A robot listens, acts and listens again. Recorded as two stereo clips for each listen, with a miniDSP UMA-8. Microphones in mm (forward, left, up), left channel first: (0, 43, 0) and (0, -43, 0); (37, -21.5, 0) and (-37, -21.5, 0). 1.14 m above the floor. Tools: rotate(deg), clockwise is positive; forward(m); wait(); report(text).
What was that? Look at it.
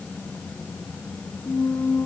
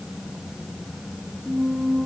rotate(-125)
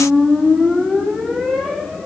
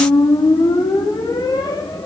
report("Facing the squeak, under 1 m away.")